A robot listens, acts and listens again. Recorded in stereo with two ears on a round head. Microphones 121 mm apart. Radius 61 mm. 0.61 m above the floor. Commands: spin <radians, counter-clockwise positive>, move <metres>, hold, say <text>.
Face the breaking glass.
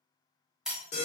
spin -0.52
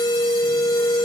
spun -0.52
hold
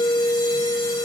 say I heard breaking glass, but can't make it out now. It was about 25° left or 145° right.